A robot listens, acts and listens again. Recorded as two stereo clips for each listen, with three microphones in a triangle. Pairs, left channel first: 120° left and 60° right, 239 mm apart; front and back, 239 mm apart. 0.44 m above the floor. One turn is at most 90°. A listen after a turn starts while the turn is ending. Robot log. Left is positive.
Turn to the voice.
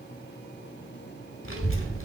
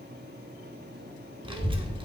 note: The child speaking: 110° left.
cmd yaw +90
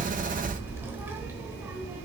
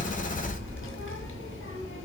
note: The child speaking is now 20° left.
cmd yaw +20
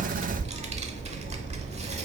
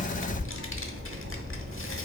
end: Facing the child speaking, under 1 m away.